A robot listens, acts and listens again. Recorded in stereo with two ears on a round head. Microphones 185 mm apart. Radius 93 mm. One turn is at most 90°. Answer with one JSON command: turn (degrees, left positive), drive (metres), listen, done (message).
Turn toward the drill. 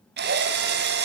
{"turn": -55}
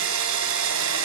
{"turn": -70}
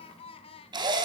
{"turn": -20}
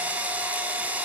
{"turn": -10}
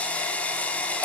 {"done": "Facing the drill, 2 to 4 m away."}